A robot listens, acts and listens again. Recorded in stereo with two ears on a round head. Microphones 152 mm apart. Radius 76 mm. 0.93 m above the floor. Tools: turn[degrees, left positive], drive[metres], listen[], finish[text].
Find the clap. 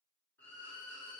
Action: listen[]
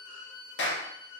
Thought: The clap: about 75° left or 105° left.
Action: turn[75]
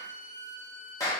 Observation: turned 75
Thought: So it is at 20° left.
Action: turn[20]
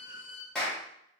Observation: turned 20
Action: finish[Facing the clap.]